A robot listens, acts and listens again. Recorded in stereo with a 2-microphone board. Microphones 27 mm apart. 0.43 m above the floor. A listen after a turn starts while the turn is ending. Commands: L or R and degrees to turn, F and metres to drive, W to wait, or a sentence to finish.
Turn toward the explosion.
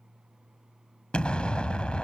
L40
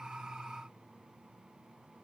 W
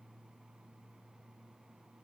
I heard an explosion, but can't make it out now. It was about straight ahead or 100° left.